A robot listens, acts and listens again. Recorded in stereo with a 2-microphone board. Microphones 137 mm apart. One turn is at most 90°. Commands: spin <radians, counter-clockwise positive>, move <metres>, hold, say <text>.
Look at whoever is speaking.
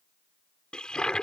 hold
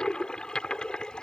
hold
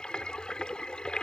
say I can't make out anyone speaking, only a toilet flushing.